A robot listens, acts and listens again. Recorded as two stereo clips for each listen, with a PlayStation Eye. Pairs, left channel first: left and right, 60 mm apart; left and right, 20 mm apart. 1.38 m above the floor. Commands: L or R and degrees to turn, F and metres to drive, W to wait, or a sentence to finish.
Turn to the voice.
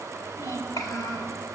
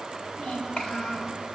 L75
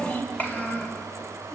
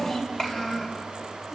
L30
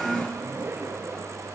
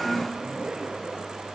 Facing the child speaking.